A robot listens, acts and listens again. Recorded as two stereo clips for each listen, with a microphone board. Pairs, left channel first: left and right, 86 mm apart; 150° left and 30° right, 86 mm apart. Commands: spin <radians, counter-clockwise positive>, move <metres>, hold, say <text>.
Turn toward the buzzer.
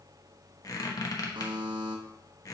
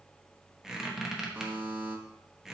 spin -1.83
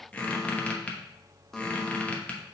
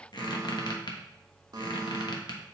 say Facing the buzzer, 1 to 2 m away.